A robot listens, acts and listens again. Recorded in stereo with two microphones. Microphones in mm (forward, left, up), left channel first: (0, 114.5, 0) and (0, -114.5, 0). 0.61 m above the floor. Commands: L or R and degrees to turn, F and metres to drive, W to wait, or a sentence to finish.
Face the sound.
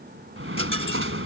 R65
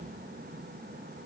W
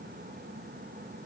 I heard a dropped coin, but can't make it out now. It was about straight ahead or 50° right.